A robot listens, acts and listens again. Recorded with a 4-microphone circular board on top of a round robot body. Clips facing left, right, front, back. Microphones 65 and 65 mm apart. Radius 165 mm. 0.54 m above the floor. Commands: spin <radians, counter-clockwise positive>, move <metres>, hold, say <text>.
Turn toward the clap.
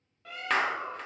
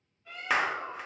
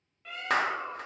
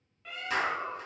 say Found it: a clap, straight ahead, under 1 m away.